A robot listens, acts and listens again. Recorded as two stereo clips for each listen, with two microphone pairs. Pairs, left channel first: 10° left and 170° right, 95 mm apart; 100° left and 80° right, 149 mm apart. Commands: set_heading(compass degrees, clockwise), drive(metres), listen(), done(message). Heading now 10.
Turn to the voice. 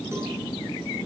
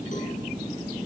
listen()
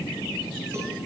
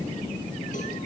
listen()
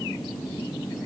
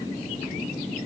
done("I can't make out anyone speaking to turn to.")